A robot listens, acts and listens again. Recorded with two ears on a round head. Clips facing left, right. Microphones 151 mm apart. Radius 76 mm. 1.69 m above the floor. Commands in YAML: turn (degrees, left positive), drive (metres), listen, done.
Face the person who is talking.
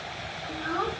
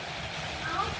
turn: 45
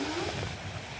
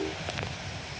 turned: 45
listen: true
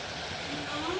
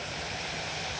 listen: true
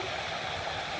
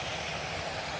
done: "I heard a child speaking, but can't make it out now. It was about straight ahead or 90° left."